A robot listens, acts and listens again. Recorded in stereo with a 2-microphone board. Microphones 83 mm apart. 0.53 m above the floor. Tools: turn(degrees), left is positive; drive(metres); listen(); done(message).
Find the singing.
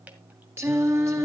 turn(degrees=-35)
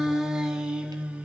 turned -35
turn(degrees=-15)
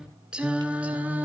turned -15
turn(degrees=-20)
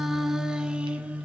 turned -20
turn(degrees=-15)
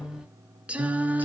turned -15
turn(degrees=-20)
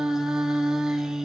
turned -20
done("Facing the singing.")